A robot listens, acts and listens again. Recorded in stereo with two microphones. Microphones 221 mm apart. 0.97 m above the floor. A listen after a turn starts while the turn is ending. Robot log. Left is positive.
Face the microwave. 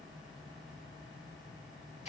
cmd idle
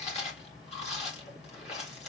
cmd idle
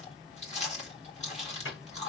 note: The microwave: about 65° left or 115° left.
cmd yaw +65
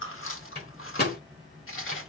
note: So it is at 50° left.
cmd yaw +50
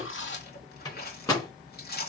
note: The microwave is now 15° left.
cmd yaw +15
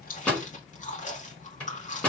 end: Found it: a microwave, straight ahead.